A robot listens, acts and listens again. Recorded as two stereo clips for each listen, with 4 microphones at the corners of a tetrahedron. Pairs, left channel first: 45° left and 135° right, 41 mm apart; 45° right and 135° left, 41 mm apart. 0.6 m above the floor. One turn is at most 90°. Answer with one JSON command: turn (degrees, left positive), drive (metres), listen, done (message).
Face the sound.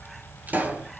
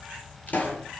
{"turn": -90}
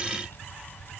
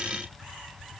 {"done": "I heard a pop from this way, but can't make it out now."}